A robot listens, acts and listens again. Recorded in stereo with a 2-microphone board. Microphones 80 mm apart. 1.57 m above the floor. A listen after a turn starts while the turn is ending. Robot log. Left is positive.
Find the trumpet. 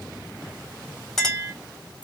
cmd idle
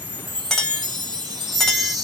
cmd idle
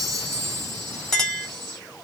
end: I can't make out a trumpet to turn to.